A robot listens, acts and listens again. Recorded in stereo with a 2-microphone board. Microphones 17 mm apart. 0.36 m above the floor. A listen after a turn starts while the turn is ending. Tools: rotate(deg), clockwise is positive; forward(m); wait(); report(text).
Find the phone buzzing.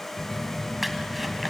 rotate(-90)
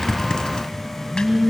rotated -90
rotate(-10)
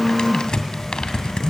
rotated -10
report("Facing the phone buzzing.")